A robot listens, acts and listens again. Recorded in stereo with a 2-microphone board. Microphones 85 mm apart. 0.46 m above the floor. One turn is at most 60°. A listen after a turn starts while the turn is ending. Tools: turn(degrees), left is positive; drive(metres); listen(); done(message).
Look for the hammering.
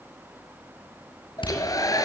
turn(degrees=60)
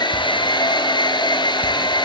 turn(degrees=30)
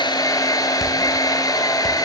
listen()
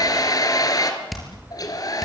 done("Facing the hammering.")